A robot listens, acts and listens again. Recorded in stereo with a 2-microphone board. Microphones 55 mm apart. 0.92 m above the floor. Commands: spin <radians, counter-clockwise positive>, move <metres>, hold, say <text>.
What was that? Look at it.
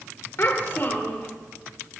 spin 0.70
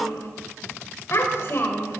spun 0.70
spin 0.79
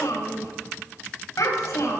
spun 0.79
spin 1.40
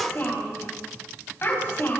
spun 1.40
spin 0.79
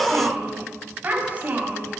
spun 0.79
spin -0.52
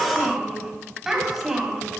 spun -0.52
say Found it: a child speaking, straight ahead.